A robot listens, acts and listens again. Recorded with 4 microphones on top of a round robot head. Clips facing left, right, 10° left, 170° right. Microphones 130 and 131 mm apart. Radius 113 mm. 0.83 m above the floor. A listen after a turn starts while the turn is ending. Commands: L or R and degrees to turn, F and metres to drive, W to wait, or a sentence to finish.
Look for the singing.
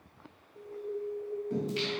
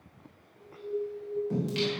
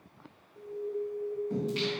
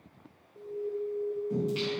R90
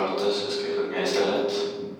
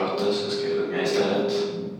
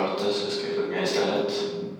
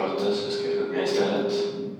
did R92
Found it: singing, straight ahead.